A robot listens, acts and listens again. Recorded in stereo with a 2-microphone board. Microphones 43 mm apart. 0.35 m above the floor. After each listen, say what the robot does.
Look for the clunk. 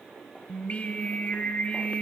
Keep listening.
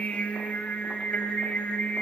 Keep listening.
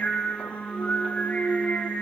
Turn 30° right.
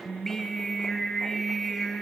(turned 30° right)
Keep listening.
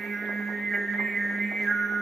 I heard a clunk, but can't make it out now. It was about 20° left or 140° right.